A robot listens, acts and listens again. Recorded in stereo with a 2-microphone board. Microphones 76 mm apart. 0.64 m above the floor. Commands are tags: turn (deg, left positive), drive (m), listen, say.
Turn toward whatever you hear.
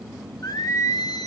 <turn deg="55"/>
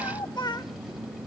<turn deg="70"/>
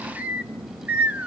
<turn deg="-20"/>
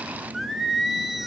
<say>Facing the singing, 1 to 2 m away.</say>